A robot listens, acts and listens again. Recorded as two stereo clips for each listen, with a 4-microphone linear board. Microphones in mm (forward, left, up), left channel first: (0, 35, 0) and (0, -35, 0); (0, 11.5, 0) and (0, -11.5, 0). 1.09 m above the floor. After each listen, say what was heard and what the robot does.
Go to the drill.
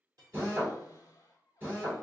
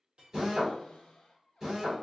The drill: about 30° right or 150° right. Turn 30° right.
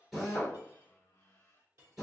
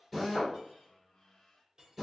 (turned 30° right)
Drive 1.0 m forward.
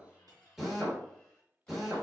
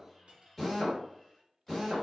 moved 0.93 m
Drive 1.0 m forward.
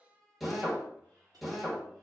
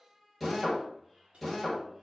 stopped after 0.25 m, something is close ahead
Arrived at the drill, straight ahead.